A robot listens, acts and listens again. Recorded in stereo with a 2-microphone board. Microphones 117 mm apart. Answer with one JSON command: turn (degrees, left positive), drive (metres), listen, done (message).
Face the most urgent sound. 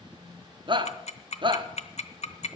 {"turn": -45}
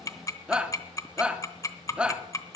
{"turn": -10}
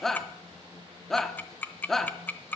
{"done": "Found it: a shout, straight ahead."}